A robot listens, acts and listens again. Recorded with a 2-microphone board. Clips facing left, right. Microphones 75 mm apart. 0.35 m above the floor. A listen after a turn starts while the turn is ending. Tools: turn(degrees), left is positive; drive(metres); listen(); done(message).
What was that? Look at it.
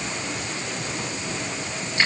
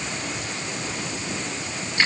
listen()
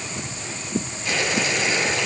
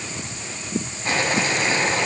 turn(degrees=-45)
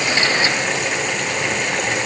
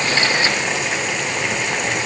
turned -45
done("Facing the boiling, 2 to 4 m away.")